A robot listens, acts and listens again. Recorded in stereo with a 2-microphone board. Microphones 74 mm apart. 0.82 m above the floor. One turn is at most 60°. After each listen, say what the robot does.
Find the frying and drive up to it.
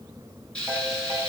Turn 30° left.
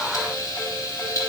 Turn 60° left.
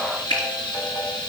Turn 60° left.
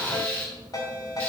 Turn 20° left.
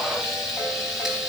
Drive 1.0 m forward.
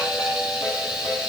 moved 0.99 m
Drive 1.0 m forward.
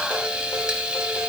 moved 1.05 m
Turn 10° right.
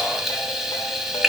Drive 1.0 m forward.
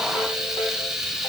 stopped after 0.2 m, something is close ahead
Arrived at the frying, straight ahead.